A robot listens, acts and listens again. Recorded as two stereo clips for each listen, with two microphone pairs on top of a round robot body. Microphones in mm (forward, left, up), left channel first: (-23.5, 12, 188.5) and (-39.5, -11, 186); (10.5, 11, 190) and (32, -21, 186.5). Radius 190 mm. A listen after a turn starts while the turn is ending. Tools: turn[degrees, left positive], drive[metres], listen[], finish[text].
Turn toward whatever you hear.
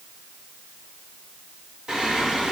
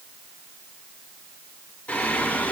Thought: The singing: 175° left.
Action: turn[175]
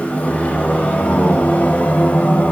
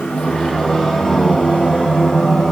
Thought: The singing is now 60° left.
Action: turn[60]
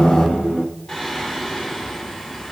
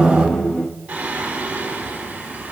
Thought: The singing is now 10° right.
Action: turn[-10]
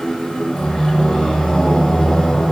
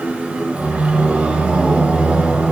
Action: finish[Facing the singing.]